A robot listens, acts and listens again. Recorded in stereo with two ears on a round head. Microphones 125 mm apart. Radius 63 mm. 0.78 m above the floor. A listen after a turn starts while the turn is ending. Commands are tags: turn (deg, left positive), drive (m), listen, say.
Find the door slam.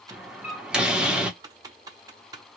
<turn deg="-30"/>
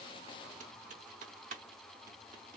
<listen/>
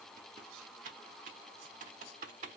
<say>I heard a door slam, but can't make it out now. It was about 25° left or 145° right.</say>